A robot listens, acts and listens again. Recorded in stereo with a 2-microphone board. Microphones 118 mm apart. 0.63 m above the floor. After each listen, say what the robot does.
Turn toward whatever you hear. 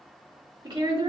Turn 35° right.
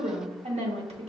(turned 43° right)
Turn 95° right.
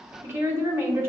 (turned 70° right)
Turn 25° right.
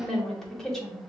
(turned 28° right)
Found it: a woman speaking, straight ahead, 1 to 2 m away.